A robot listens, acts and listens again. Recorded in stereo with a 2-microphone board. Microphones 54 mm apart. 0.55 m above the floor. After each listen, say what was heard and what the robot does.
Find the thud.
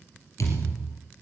The thud: about 70° left or 110° left. Turn 70° left.
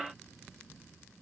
Keep listening.
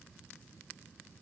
I heard a thud, but can't make it out now. It was about straight ahead or 40° left.